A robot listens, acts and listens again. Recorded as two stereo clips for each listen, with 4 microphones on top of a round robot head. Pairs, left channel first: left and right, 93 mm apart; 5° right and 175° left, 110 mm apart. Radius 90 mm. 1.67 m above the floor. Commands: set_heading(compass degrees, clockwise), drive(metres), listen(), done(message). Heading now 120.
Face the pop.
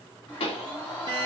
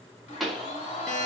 set_heading(35)
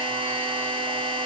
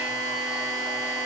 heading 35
done("I heard a pop from this way, but can't make it out now.")